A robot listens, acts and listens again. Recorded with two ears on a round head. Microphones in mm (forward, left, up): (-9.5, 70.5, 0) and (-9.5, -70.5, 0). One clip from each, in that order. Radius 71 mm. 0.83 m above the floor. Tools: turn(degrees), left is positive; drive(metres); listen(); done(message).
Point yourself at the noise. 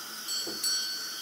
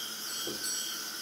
turn(degrees=45)
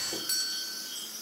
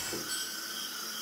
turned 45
turn(degrees=90)
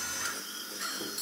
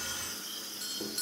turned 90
done("Facing the doorbell, 2 to 4 m away.")